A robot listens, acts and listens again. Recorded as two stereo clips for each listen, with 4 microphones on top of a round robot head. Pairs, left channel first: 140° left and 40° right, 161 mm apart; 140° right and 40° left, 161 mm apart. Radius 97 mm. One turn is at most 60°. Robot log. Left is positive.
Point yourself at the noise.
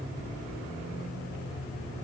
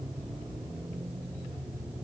cmd idle
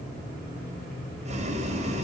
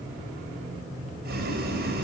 note: The boiling: 10° left.
cmd yaw +10
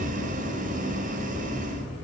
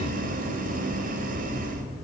end: Facing the boiling.